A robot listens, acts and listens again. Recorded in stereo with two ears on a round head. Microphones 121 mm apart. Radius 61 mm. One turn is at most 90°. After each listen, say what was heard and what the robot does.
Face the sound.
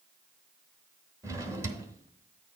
The drawer: about 25° right or 155° right. Turn 25° right.
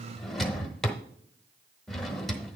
Facing the drawer, 1 to 2 m away.